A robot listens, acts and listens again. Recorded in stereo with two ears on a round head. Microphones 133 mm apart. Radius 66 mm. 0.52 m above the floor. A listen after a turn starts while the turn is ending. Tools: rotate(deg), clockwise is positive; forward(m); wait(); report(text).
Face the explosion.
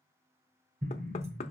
rotate(60)
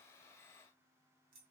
wait()
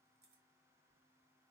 report("I heard an explosion, but can't make it out now. It was about straight ahead or 60° right.")